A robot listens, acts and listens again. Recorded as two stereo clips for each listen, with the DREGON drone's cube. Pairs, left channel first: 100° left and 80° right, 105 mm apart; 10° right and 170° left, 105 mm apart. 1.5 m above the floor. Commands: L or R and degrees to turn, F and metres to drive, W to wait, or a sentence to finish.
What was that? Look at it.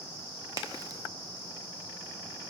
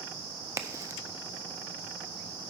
R130
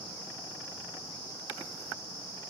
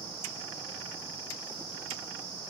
Facing where the crack came from. I can't hear it now.